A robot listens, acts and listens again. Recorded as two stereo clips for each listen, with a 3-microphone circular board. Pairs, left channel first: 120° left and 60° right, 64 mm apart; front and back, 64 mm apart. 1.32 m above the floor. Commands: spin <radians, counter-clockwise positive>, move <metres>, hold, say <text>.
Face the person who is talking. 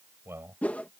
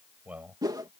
spin -2.01
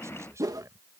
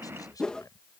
spin -0.35
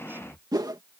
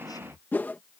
say Found it: a man speaking, straight ahead.